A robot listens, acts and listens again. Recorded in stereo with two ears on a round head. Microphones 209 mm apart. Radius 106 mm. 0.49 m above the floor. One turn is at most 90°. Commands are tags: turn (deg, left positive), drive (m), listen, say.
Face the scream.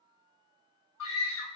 <turn deg="65"/>
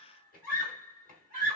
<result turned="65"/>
<turn deg="40"/>
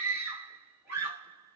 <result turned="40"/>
<turn deg="-10"/>
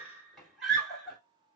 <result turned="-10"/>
<say>Facing the scream, 2 to 4 m away.</say>